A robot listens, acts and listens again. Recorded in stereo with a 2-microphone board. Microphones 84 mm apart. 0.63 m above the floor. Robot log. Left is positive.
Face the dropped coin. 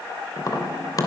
cmd idle
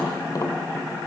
cmd idle
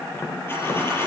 note: The dropped coin: about 30° left or 150° left.
cmd yaw +30
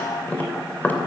cmd idle
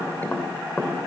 end: I heard a dropped coin, but can't make it out now. It was about straight ahead or 120° left.